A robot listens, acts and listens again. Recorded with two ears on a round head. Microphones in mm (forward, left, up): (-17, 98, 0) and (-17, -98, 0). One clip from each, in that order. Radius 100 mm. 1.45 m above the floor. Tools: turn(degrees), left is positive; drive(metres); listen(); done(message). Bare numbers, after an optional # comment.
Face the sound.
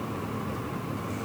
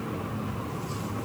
listen()
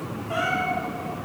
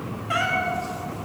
# The cat meowing: about 50° right or 130° right.
turn(-50)
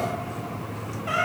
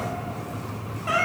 # So it is at 15° right.
turn(-15)
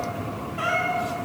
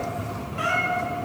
done("Found it: a cat meowing, straight ahead, 1 to 2 m away.")